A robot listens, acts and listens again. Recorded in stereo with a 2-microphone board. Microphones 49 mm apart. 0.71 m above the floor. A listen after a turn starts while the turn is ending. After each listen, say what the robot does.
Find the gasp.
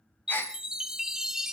Turn 45° left.
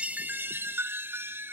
Keep listening.
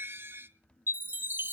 I heard a gasp, but can't make it out now. It was about straight ahead or 90° left.